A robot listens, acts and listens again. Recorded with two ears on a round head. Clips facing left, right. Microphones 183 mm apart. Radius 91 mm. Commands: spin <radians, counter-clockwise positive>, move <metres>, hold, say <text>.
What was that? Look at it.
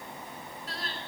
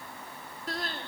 spin -0.70
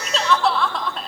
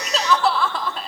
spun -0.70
say Facing the crying, 1 to 2 m away.